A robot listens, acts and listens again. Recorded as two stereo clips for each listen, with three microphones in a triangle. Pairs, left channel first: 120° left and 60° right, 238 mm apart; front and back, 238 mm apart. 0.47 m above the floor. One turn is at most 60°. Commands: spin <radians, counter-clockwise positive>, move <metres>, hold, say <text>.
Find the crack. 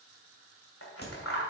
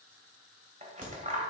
spin 1.05
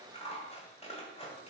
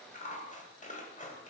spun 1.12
spin 1.05
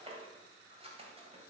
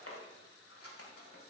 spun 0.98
spin 0.79
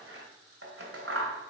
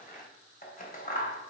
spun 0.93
say Facing where the crack came from. I can't hear it now.